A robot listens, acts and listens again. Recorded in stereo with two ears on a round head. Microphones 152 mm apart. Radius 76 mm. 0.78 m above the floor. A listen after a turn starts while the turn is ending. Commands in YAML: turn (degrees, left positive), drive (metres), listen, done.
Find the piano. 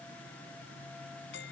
listen: true
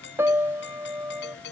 turn: -30
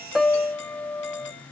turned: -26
turn: 15
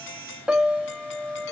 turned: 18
done: "Found it: a piano, straight ahead."